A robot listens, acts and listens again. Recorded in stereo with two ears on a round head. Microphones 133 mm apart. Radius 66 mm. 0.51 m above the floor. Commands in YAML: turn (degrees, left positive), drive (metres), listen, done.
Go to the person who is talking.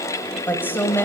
turn: 30
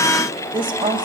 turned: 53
turn: -35
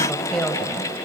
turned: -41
drive: 1.0
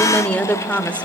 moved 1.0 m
turn: 10
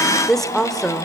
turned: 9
drive: 1.0
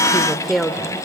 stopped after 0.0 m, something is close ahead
done: "Arrived at the woman speaking, straight ahead."